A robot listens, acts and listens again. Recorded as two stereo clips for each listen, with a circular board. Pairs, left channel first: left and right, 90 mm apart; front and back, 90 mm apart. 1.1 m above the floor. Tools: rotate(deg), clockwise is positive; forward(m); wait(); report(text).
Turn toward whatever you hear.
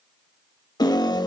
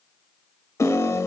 rotate(-50)
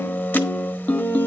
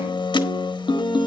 rotate(-20)
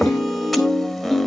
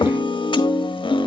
report("Found it: a piano, straight ahead, 1 to 2 m away.")